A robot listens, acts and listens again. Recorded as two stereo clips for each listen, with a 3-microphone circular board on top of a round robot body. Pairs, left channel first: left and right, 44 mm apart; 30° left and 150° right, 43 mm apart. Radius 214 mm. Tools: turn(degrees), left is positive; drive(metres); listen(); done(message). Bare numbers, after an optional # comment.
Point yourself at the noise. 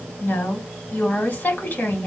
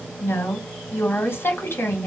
# The woman speaking: 50° left.
turn(50)
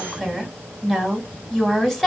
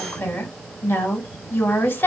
done("Facing the woman speaking.")